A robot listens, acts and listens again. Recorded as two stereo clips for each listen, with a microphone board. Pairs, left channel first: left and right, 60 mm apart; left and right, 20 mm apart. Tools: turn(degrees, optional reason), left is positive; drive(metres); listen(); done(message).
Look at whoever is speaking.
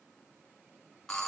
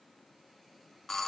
listen()
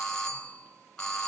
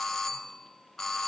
listen()
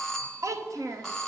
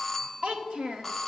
turn(degrees=-60, reason="The child speaking: about 60° right or 120° right.")
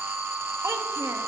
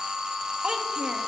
listen()
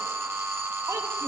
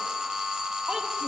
listen()
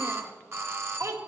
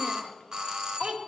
turn(degrees=-60, reason="So it is at 60° right.")
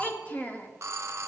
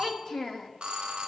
turn(degrees=25, reason="The child speaking is now 25° left.")
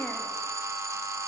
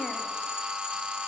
listen()
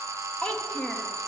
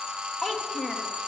turn(degrees=20, reason="The child speaking is now 20° left.")
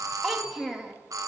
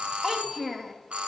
done("Facing the child speaking.")